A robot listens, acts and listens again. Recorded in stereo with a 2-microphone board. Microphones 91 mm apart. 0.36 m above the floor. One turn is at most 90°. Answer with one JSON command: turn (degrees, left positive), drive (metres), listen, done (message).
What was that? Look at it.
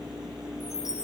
{"turn": -30}
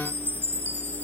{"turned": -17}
{"turn": -90}
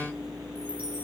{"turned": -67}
{"turn": -90}
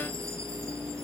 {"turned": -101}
{"turn": 10}
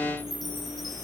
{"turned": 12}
{"done": "Found it: a chime, straight ahead."}